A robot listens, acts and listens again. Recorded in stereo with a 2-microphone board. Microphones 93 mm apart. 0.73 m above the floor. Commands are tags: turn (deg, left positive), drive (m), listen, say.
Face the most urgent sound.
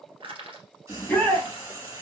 <turn deg="15"/>
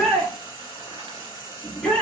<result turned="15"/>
<say>Facing the shout, under 1 m away.</say>